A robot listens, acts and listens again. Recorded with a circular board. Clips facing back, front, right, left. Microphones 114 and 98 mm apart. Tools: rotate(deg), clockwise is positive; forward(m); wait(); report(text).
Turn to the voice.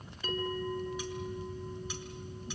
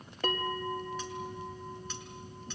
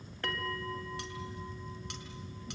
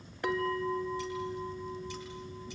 wait()
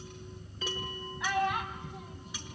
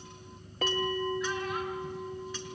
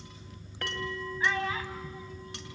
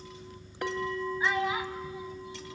rotate(-165)
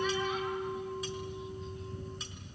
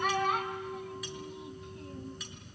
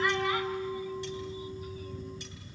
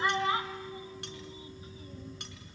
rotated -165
wait()
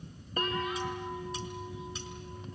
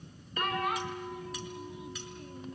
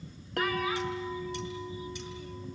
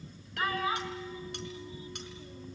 wait()
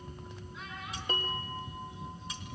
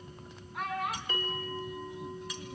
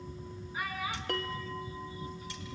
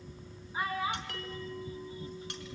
rotate(-30)
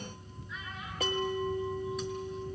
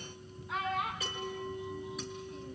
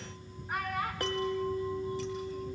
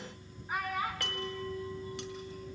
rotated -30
report("Facing the child speaking, 2 to 4 m away.")